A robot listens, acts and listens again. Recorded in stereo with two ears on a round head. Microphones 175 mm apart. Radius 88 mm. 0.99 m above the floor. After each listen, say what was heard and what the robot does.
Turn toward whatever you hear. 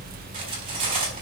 The cutlery clinking: about 30° right or 150° right. Turn 30° right.
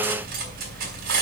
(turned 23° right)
So it is at 130° right. Turn 130° right.
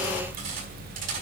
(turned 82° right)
Nothing new. It was at 45° right. Turn 45° right.
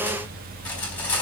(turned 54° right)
The cutlery clinking is now 10° left. Turn 10° left.
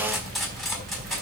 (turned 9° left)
Found it: cutlery clinking, straight ahead, over 4 m away.